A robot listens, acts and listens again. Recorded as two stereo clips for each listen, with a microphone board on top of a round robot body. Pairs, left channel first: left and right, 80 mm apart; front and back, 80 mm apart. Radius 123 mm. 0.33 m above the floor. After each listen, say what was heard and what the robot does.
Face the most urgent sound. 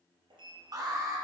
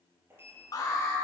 The alarm: 45° right. Turn 45° right.
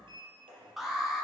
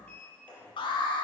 Facing the alarm, 2 to 4 m away.